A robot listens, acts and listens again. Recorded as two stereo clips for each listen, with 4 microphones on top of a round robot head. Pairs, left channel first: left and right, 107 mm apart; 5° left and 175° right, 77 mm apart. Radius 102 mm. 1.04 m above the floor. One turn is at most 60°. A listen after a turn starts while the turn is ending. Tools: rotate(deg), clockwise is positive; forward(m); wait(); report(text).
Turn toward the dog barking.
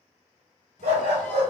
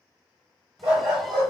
rotate(60)
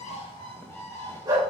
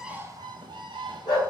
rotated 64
rotate(30)
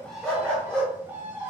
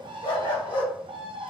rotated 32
rotate(-10)
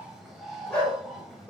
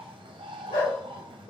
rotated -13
rotate(-10)
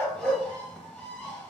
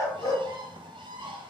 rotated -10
rotate(-10)
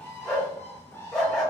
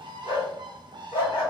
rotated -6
report("Facing the dog barking.")